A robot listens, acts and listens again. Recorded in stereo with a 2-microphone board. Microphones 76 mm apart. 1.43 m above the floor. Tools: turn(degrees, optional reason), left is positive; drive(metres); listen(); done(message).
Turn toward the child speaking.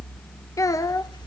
turn(degrees=45, reason="The child speaking: about 45° left or 135° left.")
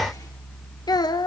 turn(degrees=85, reason="So it is at 85° left.")
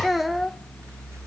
done("Facing the child speaking.")